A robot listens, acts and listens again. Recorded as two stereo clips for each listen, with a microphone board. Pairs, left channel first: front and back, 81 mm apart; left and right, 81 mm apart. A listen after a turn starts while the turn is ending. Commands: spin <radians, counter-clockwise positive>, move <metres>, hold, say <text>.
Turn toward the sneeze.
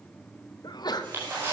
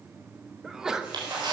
spin -0.17
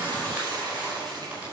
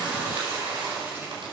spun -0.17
say I heard a sneeze from this way, but can't make it out now.